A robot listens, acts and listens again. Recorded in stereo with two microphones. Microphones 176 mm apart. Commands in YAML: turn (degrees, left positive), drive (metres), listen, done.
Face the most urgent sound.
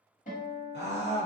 turn: 90
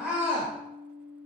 done: "Facing the scream."